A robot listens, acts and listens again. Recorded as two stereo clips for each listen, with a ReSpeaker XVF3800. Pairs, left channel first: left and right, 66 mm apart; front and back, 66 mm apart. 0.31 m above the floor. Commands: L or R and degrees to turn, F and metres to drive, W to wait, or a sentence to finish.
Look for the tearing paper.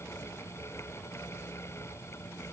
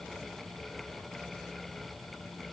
W
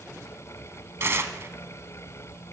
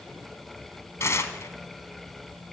R45
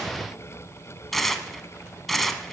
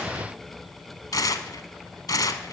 Found it: tearing paper, straight ahead.